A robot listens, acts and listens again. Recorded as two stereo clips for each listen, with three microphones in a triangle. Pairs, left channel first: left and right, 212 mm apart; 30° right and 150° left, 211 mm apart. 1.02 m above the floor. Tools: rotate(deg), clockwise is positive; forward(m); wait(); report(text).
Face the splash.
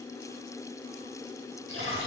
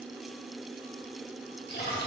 rotate(70)
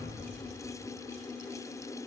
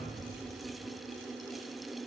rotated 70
report("Facing where the splash came from. I can't hear it now.")